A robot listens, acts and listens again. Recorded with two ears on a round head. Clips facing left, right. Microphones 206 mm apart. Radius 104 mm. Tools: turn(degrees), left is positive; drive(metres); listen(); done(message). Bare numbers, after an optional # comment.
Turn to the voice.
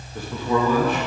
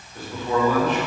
turn(90)
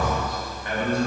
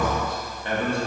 # So it is at 25° right.
turn(-25)
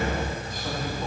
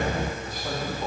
# The man speaking is now 10° right.
turn(-10)
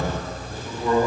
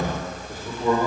# The man speaking is now 15° right.
turn(-15)
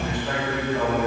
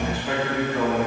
done("Facing the man speaking.")